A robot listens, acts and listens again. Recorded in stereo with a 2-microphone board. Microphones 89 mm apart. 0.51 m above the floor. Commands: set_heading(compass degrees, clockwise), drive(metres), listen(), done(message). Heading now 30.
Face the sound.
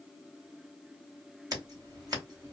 set_heading(75)
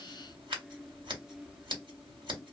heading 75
set_heading(155)
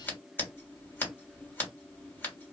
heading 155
set_heading(125)
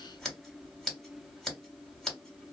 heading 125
done("Facing the scissors.")